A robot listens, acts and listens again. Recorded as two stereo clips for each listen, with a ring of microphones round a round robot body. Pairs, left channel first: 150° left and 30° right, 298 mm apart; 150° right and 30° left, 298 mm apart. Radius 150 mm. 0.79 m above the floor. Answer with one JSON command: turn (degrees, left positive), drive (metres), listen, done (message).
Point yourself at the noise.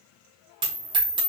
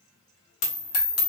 {"turn": -105}
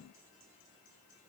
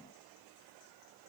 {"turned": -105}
{"done": "Facing where the dropped coin came from. I can't hear it now."}